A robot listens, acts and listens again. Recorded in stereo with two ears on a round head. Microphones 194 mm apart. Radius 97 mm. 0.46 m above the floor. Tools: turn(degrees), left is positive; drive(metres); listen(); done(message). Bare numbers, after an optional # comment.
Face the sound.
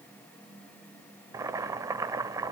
# The boiling: about 15° right or 165° right.
turn(-15)
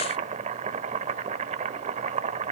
# So it is at 150° right.
turn(-150)
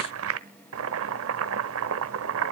# The boiling is now 75° right.
turn(-75)
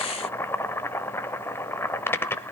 # The boiling is now 10° left.
turn(10)
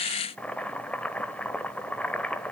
done("Facing the boiling.")